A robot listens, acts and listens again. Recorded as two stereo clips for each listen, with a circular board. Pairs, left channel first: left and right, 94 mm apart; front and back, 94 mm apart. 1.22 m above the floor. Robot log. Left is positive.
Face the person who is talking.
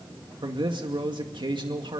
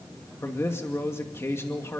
note: The man speaking: 60° right.
cmd yaw -60
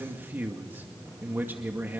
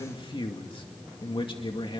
note: The man speaking is now 25° right.
cmd yaw -25
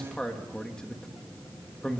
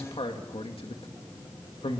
note: The man speaking is now 10° left.
cmd yaw +10
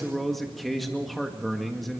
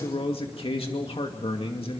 end: Found it: a man speaking, straight ahead.